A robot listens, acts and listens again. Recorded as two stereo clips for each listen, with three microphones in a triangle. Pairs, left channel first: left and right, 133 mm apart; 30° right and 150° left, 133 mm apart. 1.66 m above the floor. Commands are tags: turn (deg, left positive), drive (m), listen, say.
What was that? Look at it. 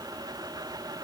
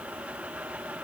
<listen/>
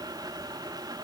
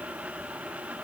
<listen/>
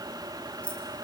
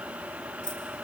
<turn deg="170"/>
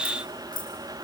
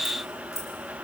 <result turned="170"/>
<turn deg="40"/>
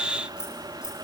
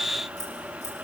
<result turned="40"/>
<say>Facing the keys jangling.</say>